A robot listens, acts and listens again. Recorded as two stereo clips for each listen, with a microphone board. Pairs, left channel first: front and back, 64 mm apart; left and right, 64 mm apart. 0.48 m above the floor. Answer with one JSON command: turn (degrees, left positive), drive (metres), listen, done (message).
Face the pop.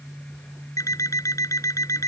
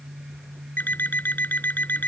{"listen": true}
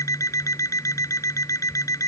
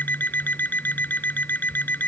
{"listen": true}
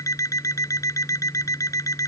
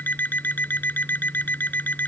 {"done": "I can't make out a pop to turn to."}